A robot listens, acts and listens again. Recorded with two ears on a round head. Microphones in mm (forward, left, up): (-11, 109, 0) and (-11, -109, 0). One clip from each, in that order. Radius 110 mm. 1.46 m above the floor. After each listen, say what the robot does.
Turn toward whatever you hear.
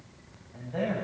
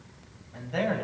Turn 75° right.
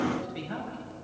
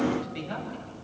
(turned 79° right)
Turn 20° right.
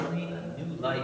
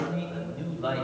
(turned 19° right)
Found it: a man speaking, straight ahead.